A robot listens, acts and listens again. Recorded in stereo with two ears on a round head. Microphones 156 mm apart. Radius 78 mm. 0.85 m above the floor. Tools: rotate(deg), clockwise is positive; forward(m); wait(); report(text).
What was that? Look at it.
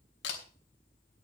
rotate(-90)
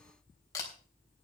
rotate(-20)
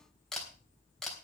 report("Facing the camera shutter, 2 to 4 m away.")